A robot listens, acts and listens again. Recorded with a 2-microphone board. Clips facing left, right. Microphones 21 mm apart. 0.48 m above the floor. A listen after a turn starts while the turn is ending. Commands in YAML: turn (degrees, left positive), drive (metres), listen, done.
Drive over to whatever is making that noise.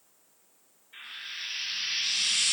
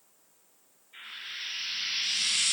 turn: 40
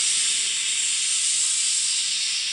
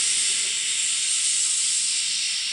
turn: 95
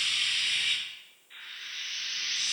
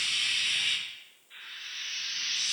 drive: 1.0
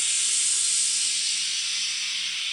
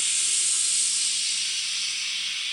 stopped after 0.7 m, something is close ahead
turn: 10
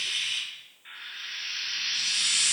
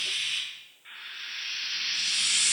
done: "I am next to the frying."